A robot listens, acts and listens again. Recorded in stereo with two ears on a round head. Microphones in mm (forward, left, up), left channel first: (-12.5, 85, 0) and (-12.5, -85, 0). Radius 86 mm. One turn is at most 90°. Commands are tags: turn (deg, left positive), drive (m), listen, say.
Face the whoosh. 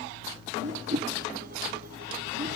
<turn deg="-35"/>
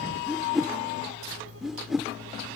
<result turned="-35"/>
<say>Found it: a whoosh, straight ahead.</say>